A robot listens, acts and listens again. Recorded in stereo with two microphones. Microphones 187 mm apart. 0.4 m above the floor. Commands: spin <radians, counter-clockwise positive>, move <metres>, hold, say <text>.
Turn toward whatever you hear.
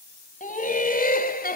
spin 0.96
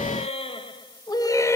spin 0.26
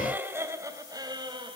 spin -0.44
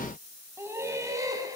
spin -0.35
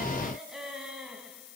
say Facing the laughter.